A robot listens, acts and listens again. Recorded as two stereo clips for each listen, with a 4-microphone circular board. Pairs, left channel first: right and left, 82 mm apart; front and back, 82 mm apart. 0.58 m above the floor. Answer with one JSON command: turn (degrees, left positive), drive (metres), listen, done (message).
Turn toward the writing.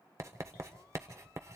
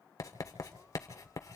{"turn": 40}
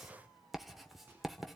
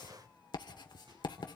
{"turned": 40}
{"done": "Facing the writing, 1 to 2 m away."}